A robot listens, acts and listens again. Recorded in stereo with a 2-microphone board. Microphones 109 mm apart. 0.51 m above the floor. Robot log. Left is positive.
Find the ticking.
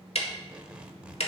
note: The ticking: about 70° left or 110° left.
cmd yaw +70
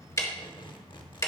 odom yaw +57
note: So it is at 30° left.
cmd yaw +30
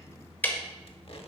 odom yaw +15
note: The ticking is now 15° left.
cmd yaw +15
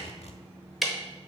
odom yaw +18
end: Found it: ticking, straight ahead, 1 to 2 m away.